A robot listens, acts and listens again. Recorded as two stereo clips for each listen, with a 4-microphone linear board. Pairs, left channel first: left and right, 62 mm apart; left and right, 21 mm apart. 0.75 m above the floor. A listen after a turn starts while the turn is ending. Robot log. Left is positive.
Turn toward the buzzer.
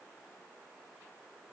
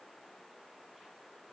cmd idle
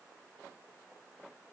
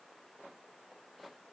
cmd idle
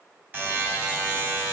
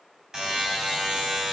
note: The buzzer: about 35° right or 145° right.
cmd yaw -35
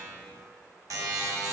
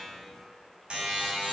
note: So it is at 110° right.
cmd yaw -110
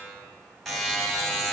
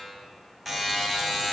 end: Facing the buzzer, 2 to 4 m away.